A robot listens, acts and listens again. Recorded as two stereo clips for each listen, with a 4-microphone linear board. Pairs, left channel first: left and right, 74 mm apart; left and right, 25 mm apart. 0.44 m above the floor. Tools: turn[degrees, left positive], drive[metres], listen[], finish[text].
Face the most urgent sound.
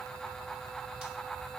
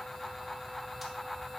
Action: listen[]
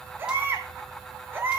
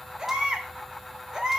Thought: The baby crying: about 30° right or 150° right.
Action: turn[-30]
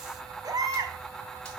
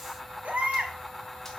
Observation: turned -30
Thought: So it is at 120° right.
Action: turn[-120]
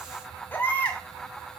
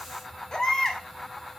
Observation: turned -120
Thought: The baby crying is now 25° left.
Action: turn[25]
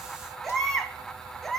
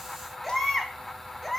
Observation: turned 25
Action: finish[Facing the baby crying, 1 to 2 m away.]